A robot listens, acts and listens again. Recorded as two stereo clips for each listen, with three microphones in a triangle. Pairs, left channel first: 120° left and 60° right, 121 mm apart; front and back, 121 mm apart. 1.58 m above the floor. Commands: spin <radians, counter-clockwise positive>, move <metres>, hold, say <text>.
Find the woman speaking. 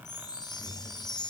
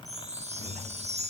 hold
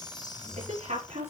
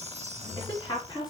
spin -0.87
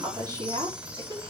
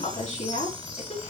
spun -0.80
say Facing the woman speaking, over 4 m away.